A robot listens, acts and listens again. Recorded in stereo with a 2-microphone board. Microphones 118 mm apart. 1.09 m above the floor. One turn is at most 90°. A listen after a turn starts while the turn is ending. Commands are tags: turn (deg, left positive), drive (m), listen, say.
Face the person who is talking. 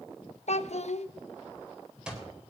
<turn deg="65"/>
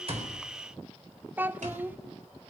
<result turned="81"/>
<turn deg="-15"/>
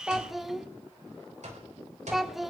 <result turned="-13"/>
<say>Facing the child speaking.</say>